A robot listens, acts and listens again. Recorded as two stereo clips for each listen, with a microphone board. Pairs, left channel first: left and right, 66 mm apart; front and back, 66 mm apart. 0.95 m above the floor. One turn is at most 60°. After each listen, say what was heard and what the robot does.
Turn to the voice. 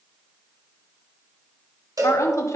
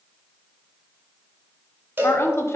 The woman speaking: 50° left. Turn 50° left.
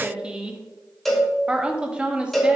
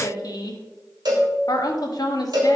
The woman speaking is now 15° right. Turn 15° right.
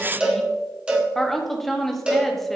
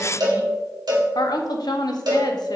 Found it: a woman speaking, straight ahead.